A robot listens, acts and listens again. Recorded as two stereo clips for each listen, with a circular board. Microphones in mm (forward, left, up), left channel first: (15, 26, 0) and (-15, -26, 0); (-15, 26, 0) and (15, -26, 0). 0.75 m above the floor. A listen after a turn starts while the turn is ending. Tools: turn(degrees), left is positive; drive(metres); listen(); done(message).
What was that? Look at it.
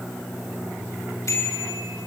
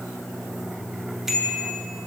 turn(degrees=25)
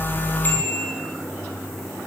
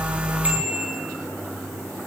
done("Found it: a bicycle bell, straight ahead.")